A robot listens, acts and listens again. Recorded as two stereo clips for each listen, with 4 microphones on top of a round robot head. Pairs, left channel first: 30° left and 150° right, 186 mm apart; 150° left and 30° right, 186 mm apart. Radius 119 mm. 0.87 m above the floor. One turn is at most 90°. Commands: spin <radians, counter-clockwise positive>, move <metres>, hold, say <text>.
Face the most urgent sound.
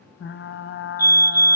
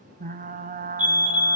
spin -1.40
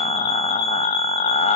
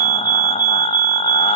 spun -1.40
say Facing the fire alarm.